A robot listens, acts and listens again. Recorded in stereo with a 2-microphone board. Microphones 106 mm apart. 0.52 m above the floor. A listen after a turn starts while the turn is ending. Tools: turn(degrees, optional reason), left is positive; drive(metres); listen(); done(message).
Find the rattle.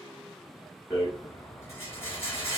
turn(degrees=20, reason="The rattle: about 20° left or 160° left.")
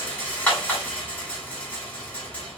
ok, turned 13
turn(degrees=10, reason="So it is at 10° left.")
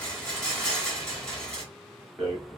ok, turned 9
done("Found it: a rattle, straight ahead, 1 to 2 m away.")